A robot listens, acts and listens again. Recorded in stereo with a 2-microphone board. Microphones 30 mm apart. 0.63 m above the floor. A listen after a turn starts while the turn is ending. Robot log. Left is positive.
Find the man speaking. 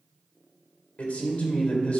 note: The man speaking: about 60° left or 120° left.
cmd yaw +60
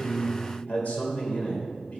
note: So it is at 55° left.
cmd yaw +55
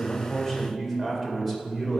end: Facing the man speaking, 2 to 4 m away.